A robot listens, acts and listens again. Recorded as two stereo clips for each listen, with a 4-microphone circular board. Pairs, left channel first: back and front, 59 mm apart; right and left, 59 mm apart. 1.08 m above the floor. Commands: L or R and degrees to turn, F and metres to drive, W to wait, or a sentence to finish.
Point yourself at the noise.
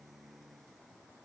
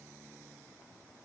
W
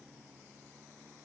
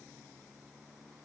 W
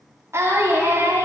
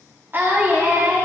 L35
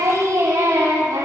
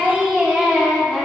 L15
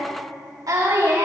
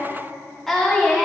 Facing the singing.